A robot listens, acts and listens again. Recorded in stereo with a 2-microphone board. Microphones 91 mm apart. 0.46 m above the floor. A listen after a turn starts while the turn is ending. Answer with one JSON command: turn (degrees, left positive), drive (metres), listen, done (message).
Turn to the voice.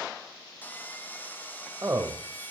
{"turn": -35}
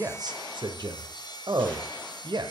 {"turn": -100}
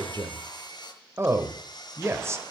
{"turn": -35}
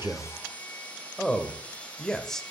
{"done": "Found it: a man speaking, straight ahead."}